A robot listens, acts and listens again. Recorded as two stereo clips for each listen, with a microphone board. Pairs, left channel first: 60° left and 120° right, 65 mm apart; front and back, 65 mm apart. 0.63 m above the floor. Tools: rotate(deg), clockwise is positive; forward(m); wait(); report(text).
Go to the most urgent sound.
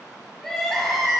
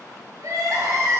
rotate(-145)
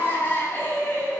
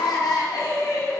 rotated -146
forward(1.0)
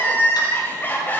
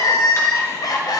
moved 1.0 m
forward(1.0)
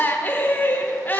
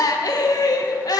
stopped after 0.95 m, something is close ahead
report("Arrived at the crying, straight ahead.")